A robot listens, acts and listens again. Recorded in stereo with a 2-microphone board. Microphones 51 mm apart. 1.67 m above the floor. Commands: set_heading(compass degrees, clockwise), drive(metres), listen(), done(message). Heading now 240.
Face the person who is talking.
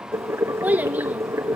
set_heading(270)
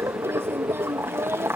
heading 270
set_heading(20)
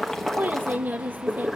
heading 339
set_heading(24)
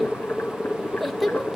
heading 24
done("Found it: a child speaking, straight ahead, 1 to 2 m away.")